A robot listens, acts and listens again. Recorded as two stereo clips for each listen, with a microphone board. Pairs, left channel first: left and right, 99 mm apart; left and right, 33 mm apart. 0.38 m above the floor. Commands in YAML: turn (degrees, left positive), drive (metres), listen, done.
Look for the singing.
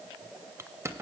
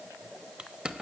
listen: true
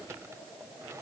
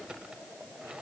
listen: true
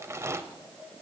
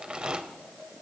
done: "I can't make out singing to turn to."